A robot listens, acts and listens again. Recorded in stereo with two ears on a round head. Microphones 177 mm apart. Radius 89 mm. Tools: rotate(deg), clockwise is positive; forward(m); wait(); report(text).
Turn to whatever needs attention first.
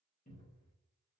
wait()
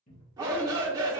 rotate(20)
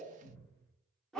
report("Facing the shout.")